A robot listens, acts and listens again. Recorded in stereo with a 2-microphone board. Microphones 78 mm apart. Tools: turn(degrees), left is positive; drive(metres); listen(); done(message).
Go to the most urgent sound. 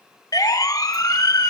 turn(degrees=45)
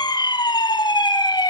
turn(degrees=80)
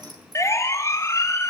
turn(degrees=40)
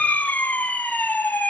turn(degrees=25)
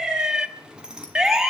drive(metres=1.0)
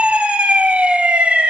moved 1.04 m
turn(degrees=-15)
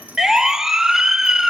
drive(metres=1.0)
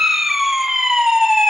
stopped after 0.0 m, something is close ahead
done("I am next to the siren.")